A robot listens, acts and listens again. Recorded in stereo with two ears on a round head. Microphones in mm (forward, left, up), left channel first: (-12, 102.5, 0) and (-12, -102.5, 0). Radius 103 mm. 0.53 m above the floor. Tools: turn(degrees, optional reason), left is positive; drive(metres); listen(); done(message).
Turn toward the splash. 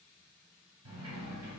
listen()
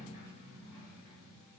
listen()
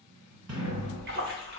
turn(degrees=-45, reason="The splash: about 45° right or 135° right.")
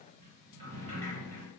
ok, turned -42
listen()
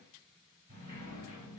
done("I heard a splash, but can't make it out now. It was about 5° right or 90° right.")